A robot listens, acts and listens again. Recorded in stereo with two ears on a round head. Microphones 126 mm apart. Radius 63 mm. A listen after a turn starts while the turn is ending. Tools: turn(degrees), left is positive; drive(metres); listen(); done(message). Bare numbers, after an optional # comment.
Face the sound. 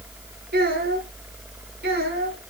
turn(-90)
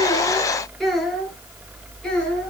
done("Found it: a child speaking, straight ahead.")